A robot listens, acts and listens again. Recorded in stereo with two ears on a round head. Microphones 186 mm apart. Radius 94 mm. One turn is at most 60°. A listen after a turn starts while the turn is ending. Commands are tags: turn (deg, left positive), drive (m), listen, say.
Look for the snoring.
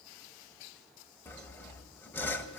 <listen/>
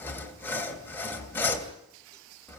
<listen/>
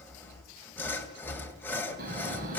<turn deg="-40"/>
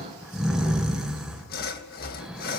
<say>Found it: snoring, straight ahead.</say>